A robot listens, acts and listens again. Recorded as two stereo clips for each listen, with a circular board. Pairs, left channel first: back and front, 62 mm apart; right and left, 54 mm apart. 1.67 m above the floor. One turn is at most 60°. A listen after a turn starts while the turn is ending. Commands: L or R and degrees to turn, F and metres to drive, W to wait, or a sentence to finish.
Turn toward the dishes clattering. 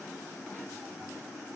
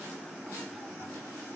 W
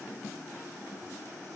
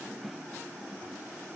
W
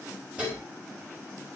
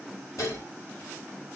R60
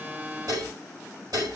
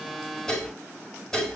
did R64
R10
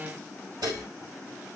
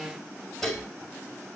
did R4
Facing the dishes clattering.